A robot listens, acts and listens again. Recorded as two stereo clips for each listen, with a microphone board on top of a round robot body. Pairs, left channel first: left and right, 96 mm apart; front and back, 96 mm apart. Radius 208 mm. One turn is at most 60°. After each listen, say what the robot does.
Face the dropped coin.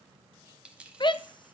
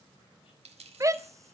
Turn 60° right.
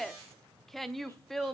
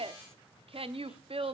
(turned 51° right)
Turn 60° right.
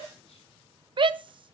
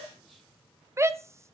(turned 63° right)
Turn 55° right.
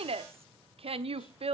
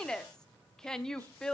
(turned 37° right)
Turn 20° right.
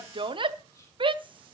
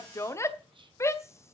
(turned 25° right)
I heard a dropped coin from this way, but can't make it out now.